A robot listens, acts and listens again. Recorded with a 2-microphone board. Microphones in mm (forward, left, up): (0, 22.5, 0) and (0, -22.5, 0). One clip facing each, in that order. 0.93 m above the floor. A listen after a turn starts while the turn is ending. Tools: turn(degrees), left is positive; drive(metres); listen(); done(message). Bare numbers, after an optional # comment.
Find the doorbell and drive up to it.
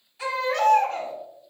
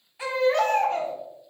listen()
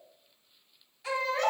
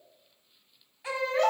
listen()
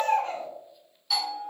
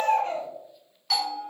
# The doorbell: about 70° right or 110° right.
turn(-70)
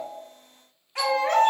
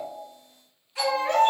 listen()
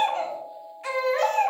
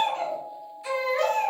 # So it is at 30° right.
turn(-30)
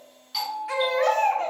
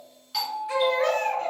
# The doorbell is now 10° left.
turn(10)
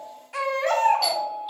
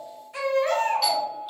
drive(1.0)
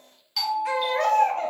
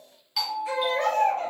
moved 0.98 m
# The doorbell is now 10° right.
turn(-10)
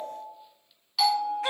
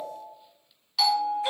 drive(1.0)
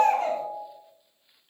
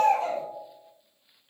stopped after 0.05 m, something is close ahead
done("Arrived at the doorbell, straight ahead.")